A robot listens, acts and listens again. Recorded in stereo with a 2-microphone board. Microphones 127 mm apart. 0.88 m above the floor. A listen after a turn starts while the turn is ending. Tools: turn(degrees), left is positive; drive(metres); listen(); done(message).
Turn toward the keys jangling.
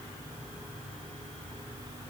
listen()
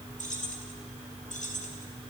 turn(degrees=75)
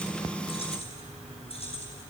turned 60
turn(degrees=50)
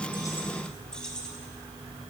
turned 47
done("Facing the keys jangling, over 4 m away.")